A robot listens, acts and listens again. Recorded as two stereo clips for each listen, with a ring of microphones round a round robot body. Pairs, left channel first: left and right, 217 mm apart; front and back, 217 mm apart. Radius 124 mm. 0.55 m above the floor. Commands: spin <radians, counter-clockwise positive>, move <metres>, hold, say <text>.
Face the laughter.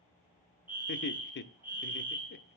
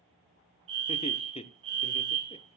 spin 1.05
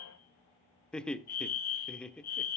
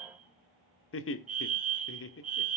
say Facing the laughter, 1 to 2 m away.